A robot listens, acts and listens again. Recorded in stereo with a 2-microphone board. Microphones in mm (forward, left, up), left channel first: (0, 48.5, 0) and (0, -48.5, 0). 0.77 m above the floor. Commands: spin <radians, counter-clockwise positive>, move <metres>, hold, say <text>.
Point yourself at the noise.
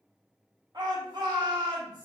spin -0.79
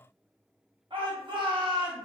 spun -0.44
spin -1.75
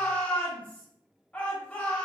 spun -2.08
spin 0.35
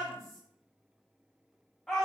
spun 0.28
say Found it: a shout, straight ahead.